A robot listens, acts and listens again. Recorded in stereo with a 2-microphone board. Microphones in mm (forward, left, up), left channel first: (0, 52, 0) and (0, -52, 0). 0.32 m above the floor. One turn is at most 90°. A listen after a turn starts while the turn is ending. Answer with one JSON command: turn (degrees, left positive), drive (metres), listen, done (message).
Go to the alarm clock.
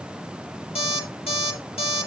{"turn": 70}
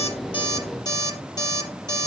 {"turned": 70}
{"turn": 40}
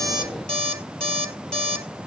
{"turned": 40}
{"turn": 10}
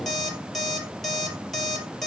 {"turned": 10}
{"drive": 1.0}
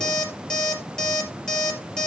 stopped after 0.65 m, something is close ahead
{"done": "Blocked. The alarm clock is further on, straight ahead."}